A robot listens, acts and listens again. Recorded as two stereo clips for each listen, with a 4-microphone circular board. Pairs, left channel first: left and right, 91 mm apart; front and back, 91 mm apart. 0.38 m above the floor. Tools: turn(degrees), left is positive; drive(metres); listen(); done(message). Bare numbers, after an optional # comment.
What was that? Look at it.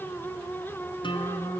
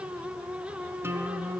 # The guitar: 115° left.
turn(115)
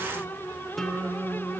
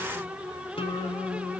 done("Facing the guitar, 1 to 2 m away.")